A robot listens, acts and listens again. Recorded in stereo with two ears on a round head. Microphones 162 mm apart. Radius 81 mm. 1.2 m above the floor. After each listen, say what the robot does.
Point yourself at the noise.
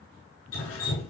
Turn 90° left.
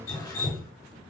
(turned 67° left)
Turn 15° left.
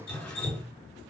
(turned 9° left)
Found it: dripping, straight ahead, over 4 m away.